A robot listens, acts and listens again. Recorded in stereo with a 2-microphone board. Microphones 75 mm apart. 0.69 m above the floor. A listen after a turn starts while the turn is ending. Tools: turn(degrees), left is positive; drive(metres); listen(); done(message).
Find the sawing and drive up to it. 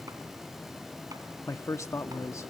listen()
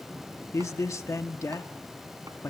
listen()
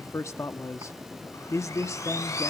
turn(degrees=45)
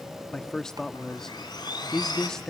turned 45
turn(degrees=90)
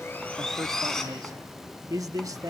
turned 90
drive(metres=1.0)
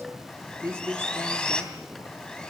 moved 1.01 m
turn(degrees=15)
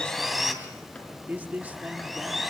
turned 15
drive(metres=1.0)
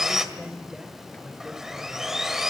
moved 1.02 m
drive(metres=1.0)
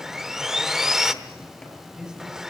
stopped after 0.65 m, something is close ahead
done("I am next to the sawing.")